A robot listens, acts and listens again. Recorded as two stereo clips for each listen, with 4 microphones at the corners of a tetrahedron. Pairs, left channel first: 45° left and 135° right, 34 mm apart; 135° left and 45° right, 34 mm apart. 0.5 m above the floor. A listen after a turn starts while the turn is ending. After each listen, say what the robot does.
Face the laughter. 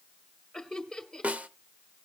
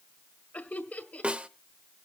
Turn 120° left.
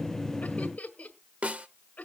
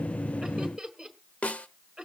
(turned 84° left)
Turn 35° left.
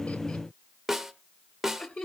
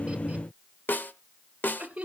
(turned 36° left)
Found it: laughter, straight ahead, 1 to 2 m away.